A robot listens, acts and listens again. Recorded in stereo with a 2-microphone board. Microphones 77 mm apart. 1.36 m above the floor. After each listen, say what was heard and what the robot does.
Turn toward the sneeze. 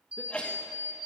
Turn 30° left.
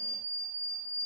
Keep listening.
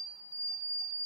I heard a sneeze, but can't make it out now. It was about 15° right or 135° left.